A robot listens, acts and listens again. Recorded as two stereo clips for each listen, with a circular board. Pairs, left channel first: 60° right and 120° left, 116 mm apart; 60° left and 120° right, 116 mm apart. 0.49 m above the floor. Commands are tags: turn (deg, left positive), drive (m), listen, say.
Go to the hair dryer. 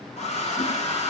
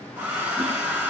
<turn deg="-45"/>
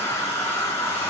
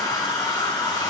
<turn deg="10"/>
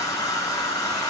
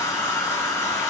<drive m="1.0"/>
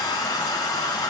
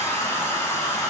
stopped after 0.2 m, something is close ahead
<say>Something is in my way. I am facing the hair dryer but have not reached it.</say>